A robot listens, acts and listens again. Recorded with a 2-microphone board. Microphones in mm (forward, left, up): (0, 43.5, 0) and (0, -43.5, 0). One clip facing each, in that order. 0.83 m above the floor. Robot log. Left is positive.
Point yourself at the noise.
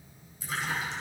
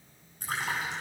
note: The splash: about 55° right or 125° right.
cmd yaw -55
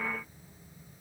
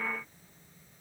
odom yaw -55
cmd idle
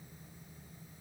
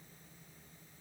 end: I heard a splash, but can't make it out now. It was about straight ahead or 70° right.